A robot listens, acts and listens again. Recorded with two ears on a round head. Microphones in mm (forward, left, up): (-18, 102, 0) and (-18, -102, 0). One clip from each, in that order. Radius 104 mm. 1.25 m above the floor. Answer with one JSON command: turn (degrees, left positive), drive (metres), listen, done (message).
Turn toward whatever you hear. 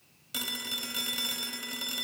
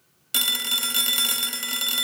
{"turn": -45}
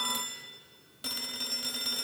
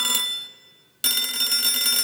{"turn": -80}
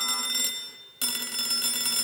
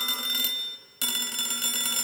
{"done": "Facing the phone ringing."}